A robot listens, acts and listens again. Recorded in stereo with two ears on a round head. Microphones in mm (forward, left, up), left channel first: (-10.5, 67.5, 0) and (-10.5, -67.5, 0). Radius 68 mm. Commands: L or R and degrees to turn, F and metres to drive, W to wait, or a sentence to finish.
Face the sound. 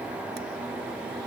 W
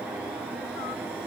W
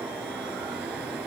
I can't make out anything to turn to.